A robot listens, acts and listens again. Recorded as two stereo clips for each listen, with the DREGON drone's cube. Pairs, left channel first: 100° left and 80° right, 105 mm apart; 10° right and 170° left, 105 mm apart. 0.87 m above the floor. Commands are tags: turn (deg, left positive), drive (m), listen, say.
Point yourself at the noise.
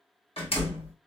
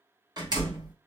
<turn deg="125"/>
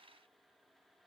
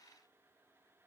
<say>I heard a door slam from this way, but can't make it out now.</say>